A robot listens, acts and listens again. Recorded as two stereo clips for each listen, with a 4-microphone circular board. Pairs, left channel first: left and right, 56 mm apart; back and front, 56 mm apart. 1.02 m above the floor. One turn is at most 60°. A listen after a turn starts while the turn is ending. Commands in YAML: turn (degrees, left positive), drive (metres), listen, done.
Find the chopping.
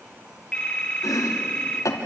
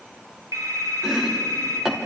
turn: 60
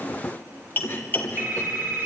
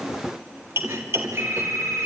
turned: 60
turn: 35
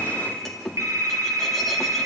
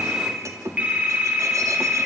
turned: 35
done: "Facing the chopping."